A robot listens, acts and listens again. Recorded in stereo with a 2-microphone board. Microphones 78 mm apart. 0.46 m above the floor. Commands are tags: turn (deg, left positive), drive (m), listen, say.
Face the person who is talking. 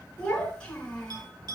<turn deg="30"/>
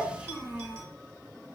<turn deg="-15"/>
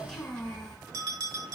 <say>Facing the child speaking, 2 to 4 m away.</say>